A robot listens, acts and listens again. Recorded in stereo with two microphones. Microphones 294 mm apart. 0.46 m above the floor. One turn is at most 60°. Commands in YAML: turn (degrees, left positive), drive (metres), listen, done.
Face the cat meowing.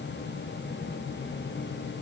listen: true
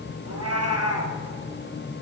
turn: -55
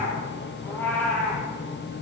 done: "Found it: a cat meowing, straight ahead, 2 to 4 m away."